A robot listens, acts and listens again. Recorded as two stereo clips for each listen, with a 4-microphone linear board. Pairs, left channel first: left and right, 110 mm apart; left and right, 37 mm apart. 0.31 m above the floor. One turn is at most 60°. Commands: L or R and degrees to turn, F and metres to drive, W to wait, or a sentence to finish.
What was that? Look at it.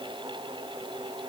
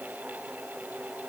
W
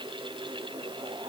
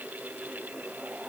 W
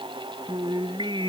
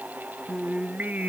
R45
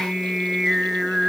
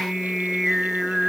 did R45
Found it: singing, straight ahead.